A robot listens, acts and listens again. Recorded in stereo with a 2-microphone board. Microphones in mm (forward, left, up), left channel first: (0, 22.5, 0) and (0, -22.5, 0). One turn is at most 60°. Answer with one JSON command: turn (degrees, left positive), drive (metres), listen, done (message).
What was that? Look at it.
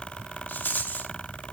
{"turn": 45}
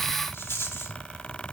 {"turn": 60}
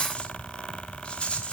{"turn": 25}
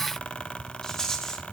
{"turn": 15}
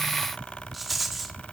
{"done": "Found it: a rattle, straight ahead."}